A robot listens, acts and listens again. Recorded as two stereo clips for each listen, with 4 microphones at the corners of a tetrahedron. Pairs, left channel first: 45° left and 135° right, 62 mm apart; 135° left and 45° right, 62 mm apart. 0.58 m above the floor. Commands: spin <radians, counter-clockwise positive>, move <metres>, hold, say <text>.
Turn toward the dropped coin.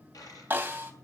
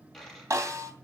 spin 0.87
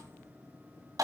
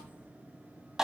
say I heard a dropped coin from this way, but can't make it out now.